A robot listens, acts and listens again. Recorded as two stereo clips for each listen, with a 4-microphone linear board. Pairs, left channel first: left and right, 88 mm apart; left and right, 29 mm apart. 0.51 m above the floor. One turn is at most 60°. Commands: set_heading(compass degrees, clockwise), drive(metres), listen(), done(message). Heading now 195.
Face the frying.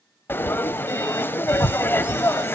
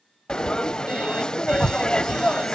set_heading(170)
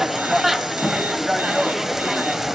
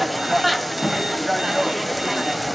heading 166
done("Facing the frying, 1 to 2 m away.")